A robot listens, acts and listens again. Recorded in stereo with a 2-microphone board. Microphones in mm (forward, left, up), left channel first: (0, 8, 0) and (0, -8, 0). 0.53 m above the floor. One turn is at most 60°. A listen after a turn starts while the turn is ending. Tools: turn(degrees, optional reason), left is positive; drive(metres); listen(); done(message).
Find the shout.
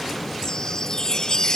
listen()
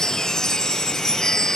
listen()
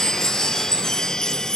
done("I can't make out a shout to turn to.")